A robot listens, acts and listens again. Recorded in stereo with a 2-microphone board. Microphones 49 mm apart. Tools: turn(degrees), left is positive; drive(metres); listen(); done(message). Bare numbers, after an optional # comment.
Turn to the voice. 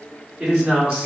# The man speaking: about 20° right or 160° right.
turn(-20)
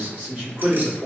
# So it is at 135° right.
turn(-135)
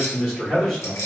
done("Found it: a man speaking, straight ahead.")